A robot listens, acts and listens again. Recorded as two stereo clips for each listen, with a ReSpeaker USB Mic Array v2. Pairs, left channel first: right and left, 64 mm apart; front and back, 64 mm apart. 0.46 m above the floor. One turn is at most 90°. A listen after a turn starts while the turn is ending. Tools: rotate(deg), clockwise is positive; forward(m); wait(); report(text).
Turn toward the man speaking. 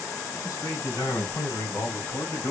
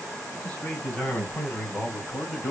rotate(65)
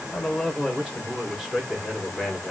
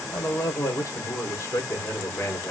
rotate(-20)
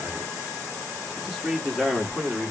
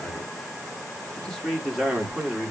rotate(-90)
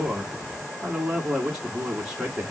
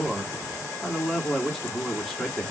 rotate(-45)
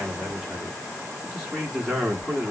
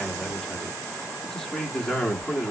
rotate(-25)
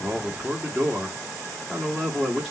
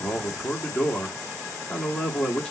report("Facing the man speaking.")